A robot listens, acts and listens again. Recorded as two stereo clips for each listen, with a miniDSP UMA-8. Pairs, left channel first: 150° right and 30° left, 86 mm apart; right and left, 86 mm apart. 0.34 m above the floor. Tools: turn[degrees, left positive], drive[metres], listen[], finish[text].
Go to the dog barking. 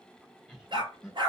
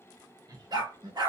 Thought: The dog barking: 50° left.
Action: turn[50]
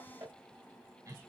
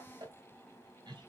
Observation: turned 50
Action: listen[]
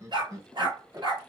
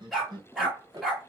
Action: drive[1.0]
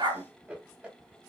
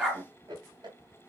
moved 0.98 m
Action: drive[1.0]
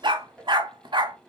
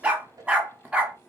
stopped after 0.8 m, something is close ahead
Thought: The dog barking is now 15° left.
Action: turn[15]
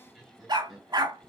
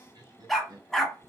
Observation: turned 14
Action: finish[I am next to the dog barking.]